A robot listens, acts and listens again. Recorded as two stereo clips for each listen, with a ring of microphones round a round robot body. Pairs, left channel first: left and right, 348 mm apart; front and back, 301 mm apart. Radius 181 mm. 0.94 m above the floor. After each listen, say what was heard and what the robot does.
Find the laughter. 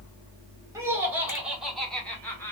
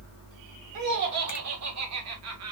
The laughter: 170° left. Turn 170° left.
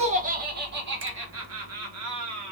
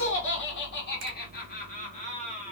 The laughter is now 70° right. Turn 70° right.
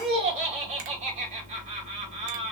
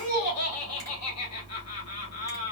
The laughter is now 20° right. Turn 20° right.
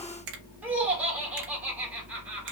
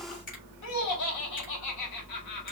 Found it: laughter, straight ahead, 1 to 2 m away.